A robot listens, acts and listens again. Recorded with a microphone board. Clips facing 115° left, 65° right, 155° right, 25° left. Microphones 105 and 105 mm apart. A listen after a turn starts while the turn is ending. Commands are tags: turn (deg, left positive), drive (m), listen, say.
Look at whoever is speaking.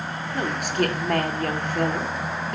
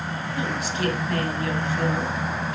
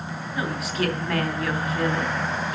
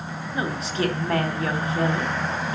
<turn deg="80"/>
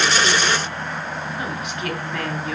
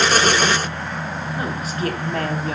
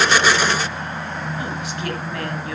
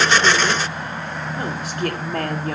<listen/>
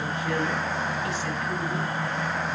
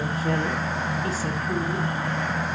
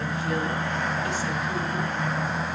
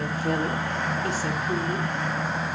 <listen/>
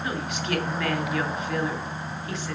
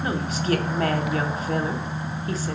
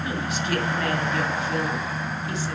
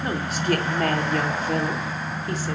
<turn deg="-20"/>
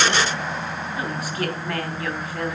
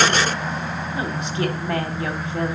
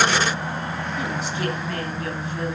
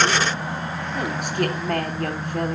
<say>Facing the woman speaking, 2 to 4 m away.</say>